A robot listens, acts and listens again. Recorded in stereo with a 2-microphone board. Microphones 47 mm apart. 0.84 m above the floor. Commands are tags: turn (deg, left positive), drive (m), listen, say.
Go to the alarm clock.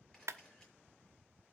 <listen/>
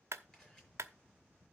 <listen/>
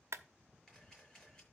<say>I can't make out an alarm clock, only a clap and a camera shutter.</say>